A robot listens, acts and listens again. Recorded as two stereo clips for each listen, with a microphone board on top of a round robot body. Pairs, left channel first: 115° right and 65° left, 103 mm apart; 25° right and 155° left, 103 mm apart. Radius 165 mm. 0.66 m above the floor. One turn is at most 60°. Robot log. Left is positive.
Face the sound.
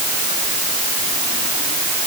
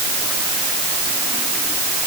cmd idle
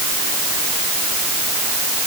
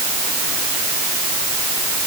cmd idle
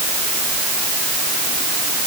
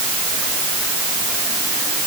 end: I can't make out anything.